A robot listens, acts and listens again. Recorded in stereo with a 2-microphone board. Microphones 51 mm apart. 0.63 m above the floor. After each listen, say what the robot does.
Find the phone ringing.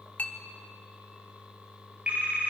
Turn 30° right.
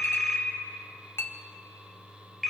Found it: a phone ringing, straight ahead.